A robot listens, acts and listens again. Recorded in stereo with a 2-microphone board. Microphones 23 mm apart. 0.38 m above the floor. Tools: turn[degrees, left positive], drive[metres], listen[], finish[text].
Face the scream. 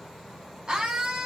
Thought: The scream: about 35° right or 145° right.
Action: turn[-35]
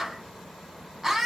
Thought: So it is at 10° right.
Action: turn[-10]
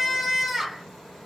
Action: finish[Found it: a scream, straight ahead, 2 to 4 m away.]